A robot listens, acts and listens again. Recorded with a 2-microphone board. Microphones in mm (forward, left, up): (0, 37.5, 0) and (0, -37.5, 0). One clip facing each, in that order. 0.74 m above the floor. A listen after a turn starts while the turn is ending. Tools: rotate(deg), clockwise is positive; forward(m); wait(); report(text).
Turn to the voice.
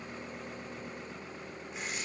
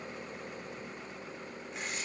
wait()
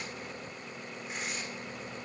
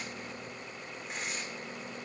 wait()
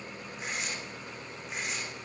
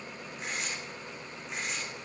report("I can't make out anyone speaking, only tearing paper.")